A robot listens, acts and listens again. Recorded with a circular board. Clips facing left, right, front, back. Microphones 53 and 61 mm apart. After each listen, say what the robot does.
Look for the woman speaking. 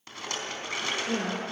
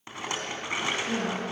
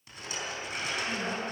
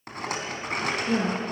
Turn 155° left.
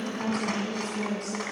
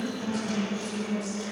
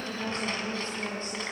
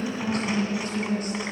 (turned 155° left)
Turn 60° left.
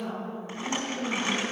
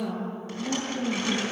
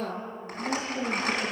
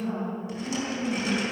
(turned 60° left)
Turn 20° right.
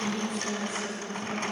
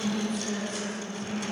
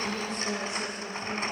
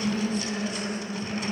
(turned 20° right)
Facing the woman speaking, over 4 m away.